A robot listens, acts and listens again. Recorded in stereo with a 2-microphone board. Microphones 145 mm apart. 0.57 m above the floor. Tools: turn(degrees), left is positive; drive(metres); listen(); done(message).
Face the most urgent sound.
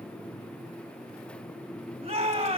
turn(degrees=-40)
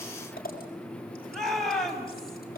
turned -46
done("Found it: a shout, straight ahead, 2 to 4 m away.")